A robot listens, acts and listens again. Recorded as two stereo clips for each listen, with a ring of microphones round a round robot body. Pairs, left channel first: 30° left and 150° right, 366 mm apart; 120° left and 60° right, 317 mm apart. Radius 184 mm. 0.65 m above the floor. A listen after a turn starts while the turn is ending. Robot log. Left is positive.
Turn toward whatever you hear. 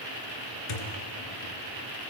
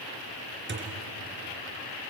end: Found it: a thud, straight ahead, 2 to 4 m away.